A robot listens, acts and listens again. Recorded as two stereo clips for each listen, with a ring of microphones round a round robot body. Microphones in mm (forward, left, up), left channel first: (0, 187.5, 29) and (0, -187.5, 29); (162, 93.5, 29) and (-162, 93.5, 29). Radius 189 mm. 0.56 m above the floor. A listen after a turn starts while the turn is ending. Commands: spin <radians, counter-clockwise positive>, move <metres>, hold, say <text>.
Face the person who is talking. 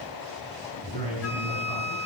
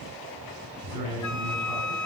spin 2.88
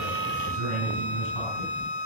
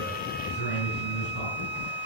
spin 0.96
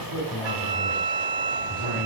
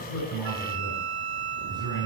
spin 0.17
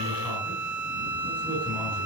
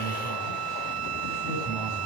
hold
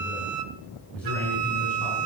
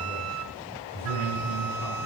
say Found it: a man speaking, straight ahead.